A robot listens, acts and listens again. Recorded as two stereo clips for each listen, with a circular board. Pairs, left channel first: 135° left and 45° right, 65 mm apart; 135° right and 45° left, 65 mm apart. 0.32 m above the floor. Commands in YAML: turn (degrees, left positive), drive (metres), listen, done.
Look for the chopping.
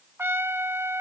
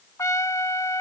listen: true
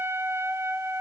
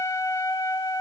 listen: true
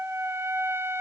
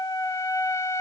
done: "I can't make out chopping to turn to."